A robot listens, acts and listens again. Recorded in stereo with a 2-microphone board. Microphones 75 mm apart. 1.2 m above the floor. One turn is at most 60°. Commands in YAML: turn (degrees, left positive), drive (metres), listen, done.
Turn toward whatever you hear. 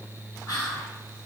turn: 55
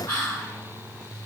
turn: 60
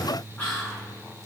turn: 15
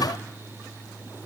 listen: true
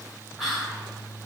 done: "Facing the whispering, 1 to 2 m away."